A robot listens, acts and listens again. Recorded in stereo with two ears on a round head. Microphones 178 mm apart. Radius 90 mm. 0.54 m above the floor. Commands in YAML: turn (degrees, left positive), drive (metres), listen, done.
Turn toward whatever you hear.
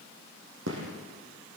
turn: -70
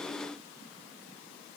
listen: true
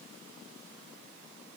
done: "I heard a gunshot, but can't make it out now. It was about straight ahead or 40° right."